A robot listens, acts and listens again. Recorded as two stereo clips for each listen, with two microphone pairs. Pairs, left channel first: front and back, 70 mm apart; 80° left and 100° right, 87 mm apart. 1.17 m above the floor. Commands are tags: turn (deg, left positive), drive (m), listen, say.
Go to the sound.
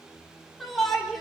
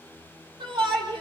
<turn deg="-85"/>
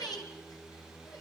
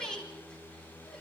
<drive m="1.0"/>
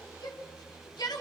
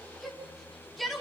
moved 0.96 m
<drive m="1.0"/>
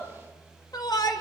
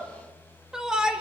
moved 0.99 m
<turn deg="-15"/>
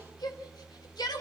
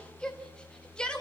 <drive m="1.0"/>
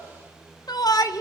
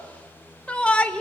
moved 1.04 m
<drive m="1.0"/>
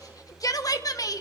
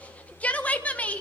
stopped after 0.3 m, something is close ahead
<turn deg="10"/>
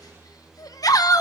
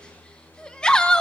<say>I am next to the shout.</say>